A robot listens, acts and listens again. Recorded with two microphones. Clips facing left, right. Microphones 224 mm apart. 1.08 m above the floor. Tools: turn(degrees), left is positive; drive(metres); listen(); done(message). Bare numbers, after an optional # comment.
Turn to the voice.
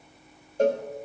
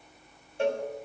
listen()
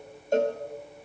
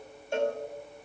listen()
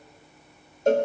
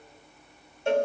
done("I can't make out anyone speaking, only a cowbell.")